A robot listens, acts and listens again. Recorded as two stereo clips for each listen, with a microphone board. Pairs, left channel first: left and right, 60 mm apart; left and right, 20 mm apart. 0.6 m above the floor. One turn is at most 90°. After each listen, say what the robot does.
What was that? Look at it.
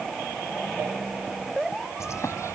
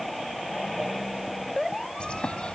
Turn 60° left.
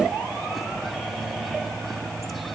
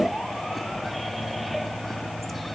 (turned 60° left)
Found it: a bird, straight ahead.